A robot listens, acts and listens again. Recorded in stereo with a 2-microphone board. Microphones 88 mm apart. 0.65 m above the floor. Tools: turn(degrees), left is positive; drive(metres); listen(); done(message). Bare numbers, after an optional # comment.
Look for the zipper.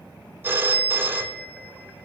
listen()
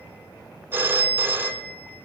listen()
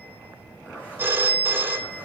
# The zipper: about 15° left or 165° left.
turn(15)
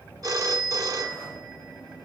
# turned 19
listen()
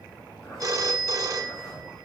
# So it is at 145° left.
turn(145)
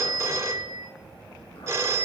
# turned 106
# Nothing new. It was at 40° left.
turn(40)
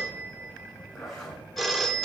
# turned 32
done("Facing the zipper.")